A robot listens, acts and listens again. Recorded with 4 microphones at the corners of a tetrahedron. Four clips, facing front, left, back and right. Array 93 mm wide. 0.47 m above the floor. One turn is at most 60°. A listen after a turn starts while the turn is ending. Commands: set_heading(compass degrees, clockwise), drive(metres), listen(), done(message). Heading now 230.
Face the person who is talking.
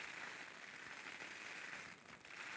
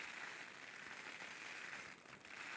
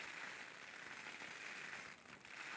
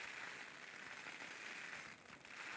listen()
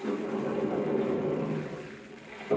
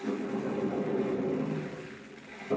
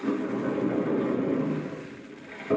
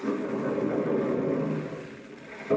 listen()
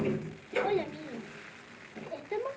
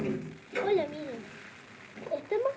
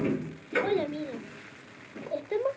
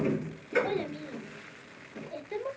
set_heading(170)
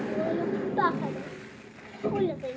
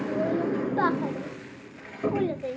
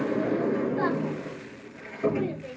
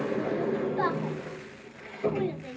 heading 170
set_heading(110)
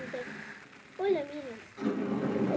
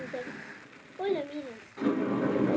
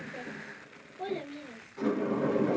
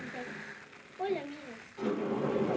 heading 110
set_heading(75)
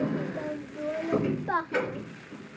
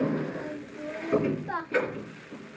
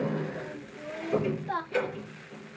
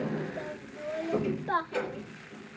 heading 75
set_heading(95)
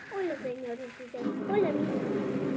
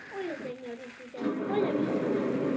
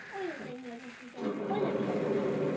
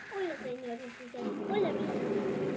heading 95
done("Found it: a child speaking, straight ahead.")